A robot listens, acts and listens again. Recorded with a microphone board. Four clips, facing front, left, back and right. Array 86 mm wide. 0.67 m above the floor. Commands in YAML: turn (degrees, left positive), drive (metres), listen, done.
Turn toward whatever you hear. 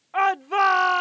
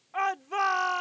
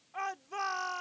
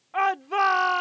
turn: -20
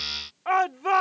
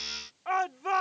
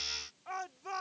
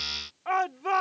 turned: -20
done: "Found it: a shout, straight ahead."